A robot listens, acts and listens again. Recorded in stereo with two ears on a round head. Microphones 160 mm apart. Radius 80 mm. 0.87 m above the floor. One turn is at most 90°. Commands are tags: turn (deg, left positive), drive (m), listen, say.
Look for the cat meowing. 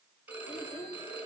<listen/>
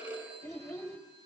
<listen/>
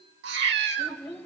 <turn deg="-65"/>
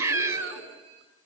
<turn deg="-15"/>
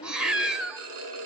<say>Found it: a cat meowing, straight ahead.</say>